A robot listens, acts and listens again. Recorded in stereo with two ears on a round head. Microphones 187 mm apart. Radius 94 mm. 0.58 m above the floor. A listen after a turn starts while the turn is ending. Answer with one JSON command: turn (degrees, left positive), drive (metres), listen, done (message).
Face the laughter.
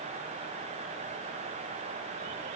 {"listen": true}
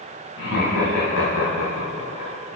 {"turn": 90}
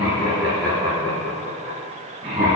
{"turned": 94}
{"turn": -25}
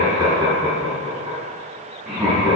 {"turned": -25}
{"done": "Found it: laughter, straight ahead."}